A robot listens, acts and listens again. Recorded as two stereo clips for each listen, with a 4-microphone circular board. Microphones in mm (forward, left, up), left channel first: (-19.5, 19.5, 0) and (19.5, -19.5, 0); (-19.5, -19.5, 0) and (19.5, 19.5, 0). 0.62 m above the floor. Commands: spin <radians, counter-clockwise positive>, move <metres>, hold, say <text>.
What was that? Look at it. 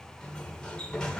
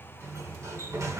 spin 1.05
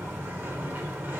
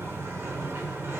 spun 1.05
say Facing the sliding door, under 1 m away.